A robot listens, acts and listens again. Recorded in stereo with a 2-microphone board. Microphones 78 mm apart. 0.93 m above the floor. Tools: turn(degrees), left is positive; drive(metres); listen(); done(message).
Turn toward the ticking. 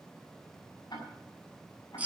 turn(degrees=60)
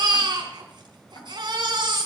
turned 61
turn(degrees=60)
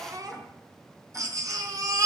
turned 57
listen()
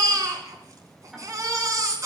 done("Facing the ticking.")